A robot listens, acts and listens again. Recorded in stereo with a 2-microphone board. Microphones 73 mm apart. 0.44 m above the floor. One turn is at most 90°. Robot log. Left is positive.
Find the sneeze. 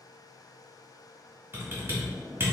cmd idle
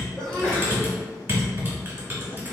cmd yaw +30
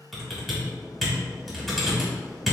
cmd idle
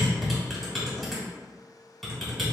end: I heard a sneeze, but can't make it out now. It was about 20° right or 140° left.